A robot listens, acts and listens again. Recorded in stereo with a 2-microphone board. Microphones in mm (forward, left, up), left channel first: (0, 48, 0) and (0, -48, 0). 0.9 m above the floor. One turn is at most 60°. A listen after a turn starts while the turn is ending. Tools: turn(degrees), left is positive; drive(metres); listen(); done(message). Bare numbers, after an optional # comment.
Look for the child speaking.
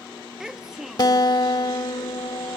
turn(-30)
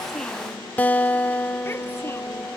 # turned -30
listen()
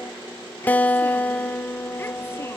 listen()
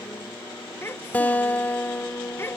# So it is at 25° left.
turn(25)
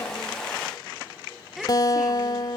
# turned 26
done("Facing the child speaking.")